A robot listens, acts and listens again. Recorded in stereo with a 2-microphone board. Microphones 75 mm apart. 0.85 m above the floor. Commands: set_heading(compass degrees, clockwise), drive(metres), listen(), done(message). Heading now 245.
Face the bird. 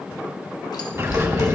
set_heading(280)
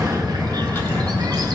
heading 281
set_heading(31)
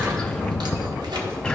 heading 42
set_heading(32)
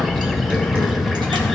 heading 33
done("Facing the bird, under 1 m away.")